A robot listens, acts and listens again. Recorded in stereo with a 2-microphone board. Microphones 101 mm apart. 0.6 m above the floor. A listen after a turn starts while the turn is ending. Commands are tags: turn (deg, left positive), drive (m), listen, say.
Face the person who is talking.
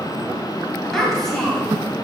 <turn deg="30"/>
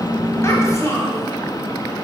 <turn deg="145"/>
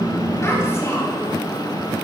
<listen/>
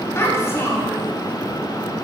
<turn deg="25"/>
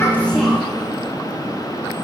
<listen/>
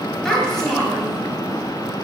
<say>Found it: a child speaking, straight ahead, 2 to 4 m away.</say>